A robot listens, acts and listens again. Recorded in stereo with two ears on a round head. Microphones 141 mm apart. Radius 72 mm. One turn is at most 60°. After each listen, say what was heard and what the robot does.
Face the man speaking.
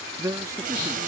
The man speaking: about 20° right or 160° right. Turn 20° right.
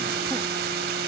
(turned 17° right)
Keep listening.
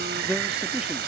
Keep listening.
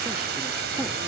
I heard a man speaking, but can't make it out now. It was about 5° right or 145° right.